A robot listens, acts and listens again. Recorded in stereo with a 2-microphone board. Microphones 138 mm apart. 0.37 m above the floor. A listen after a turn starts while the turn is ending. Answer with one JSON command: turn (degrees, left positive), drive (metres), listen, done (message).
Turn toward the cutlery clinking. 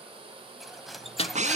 {"turn": 30}
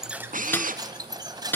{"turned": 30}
{"turn": -30}
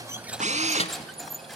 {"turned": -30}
{"done": "Facing the cutlery clinking, 1 to 2 m away."}